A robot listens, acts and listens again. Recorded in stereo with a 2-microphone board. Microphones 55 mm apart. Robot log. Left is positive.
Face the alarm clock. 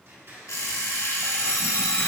note: The alarm clock: about 70° left or 110° left.
cmd yaw +70
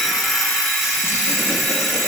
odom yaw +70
end: Found it: an alarm clock, straight ahead, 1 to 2 m away.